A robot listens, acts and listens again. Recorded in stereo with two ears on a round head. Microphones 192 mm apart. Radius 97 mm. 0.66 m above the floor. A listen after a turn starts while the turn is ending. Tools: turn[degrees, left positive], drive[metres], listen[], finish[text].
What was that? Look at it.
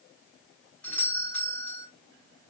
Action: turn[30]
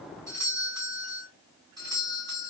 Thought: So it is at 20° right.
Action: turn[-20]
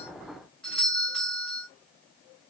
Action: finish[Found it: a doorbell, straight ahead, 1 to 2 m away.]